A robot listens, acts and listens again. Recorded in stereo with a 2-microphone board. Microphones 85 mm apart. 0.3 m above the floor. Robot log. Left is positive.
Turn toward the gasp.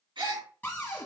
note: The gasp: about 75° right or 105° right.
cmd yaw -75
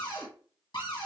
cmd idle
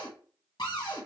end: I heard a gasp, but can't make it out now. It was about straight ahead or 30° right.